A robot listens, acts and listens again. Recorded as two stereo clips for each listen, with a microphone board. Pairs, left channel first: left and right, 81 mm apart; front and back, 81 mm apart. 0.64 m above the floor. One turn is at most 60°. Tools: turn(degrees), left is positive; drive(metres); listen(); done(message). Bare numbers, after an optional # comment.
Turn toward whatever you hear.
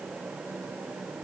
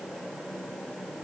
listen()
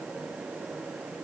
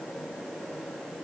listen()
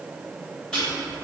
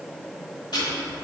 # The ticking: 10° left.
turn(10)
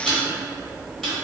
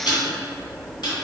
done("Found it: ticking, straight ahead.")